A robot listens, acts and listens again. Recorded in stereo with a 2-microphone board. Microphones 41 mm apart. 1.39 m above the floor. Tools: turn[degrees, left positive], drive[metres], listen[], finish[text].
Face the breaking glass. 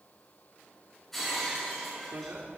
Action: turn[30]
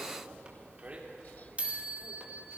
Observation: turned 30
Action: listen[]
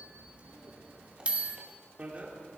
Action: finish[I heard breaking glass, but can't make it out now. It was about 25° right or 145° left.]